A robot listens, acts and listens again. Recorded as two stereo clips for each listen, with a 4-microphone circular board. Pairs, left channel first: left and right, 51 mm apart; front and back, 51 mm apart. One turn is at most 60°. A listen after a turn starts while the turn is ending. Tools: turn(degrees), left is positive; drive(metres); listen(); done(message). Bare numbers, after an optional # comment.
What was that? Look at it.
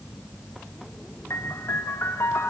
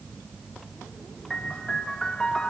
# The piano: 70° left.
turn(60)
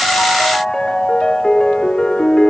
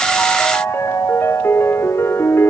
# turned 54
# The piano is now 15° left.
turn(15)
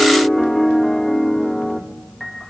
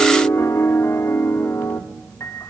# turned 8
done("Found it: a piano, straight ahead, 1 to 2 m away.")